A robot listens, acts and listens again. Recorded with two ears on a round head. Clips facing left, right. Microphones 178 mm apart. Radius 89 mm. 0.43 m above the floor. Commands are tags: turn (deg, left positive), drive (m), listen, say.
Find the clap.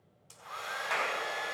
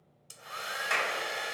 <turn deg="-35"/>
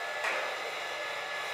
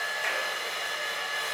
<listen/>
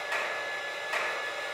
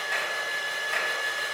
<listen/>
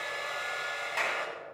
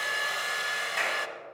<say>Found it: a clap, straight ahead.</say>